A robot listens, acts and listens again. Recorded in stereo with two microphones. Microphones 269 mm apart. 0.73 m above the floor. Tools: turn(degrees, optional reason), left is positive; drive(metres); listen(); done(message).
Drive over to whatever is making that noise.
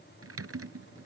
turn(degrees=-60, reason="The typing on a keyboard: about 60° right or 120° right.")
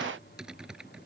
drive(metres=1.0)
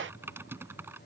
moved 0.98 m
turn(degrees=-10, reason="The typing on a keyboard is now 10° right.")
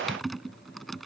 drive(metres=1.0)
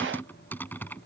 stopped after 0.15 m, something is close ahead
turn(degrees=10, reason="The typing on a keyboard is now 10° left.")
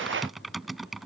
done("I am next to the typing on a keyboard.")